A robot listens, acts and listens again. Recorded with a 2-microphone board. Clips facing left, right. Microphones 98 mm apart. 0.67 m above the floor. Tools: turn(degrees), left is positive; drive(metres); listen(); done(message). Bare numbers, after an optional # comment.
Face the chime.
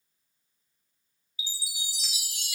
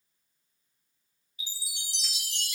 turn(30)
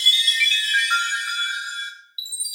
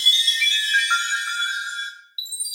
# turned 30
# So it is at 25° right.
turn(-25)
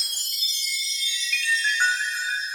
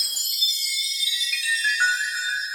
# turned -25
done("Facing the chime.")